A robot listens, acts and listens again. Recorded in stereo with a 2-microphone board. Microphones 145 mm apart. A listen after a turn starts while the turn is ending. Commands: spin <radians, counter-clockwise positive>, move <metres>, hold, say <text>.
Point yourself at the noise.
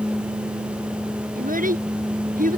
spin -1.31
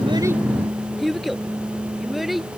say Facing the child speaking.